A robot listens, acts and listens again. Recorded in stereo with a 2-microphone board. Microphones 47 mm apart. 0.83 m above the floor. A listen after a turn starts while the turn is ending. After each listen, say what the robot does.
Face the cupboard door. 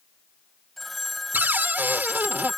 Turn 45° right.
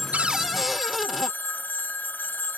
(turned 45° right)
Facing the cupboard door.